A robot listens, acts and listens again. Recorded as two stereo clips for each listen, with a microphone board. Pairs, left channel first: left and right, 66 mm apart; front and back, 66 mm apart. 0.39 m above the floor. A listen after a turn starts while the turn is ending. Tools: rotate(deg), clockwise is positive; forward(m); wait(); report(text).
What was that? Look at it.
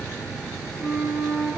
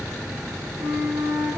rotate(-180)
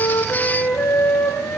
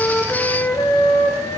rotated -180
rotate(-20)
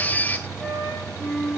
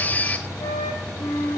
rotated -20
report("Facing the flute, over 4 m away.")